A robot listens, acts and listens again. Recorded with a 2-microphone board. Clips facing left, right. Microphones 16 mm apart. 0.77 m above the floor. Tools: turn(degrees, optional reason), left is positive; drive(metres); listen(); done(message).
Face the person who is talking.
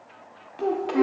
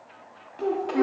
turn(degrees=20, reason="The child speaking: about 20° left or 160° left.")
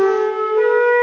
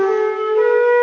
listen()
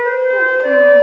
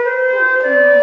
listen()
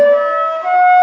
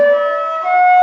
done("I heard a child speaking, but can't make it out now. It was about straight ahead or 140° left.")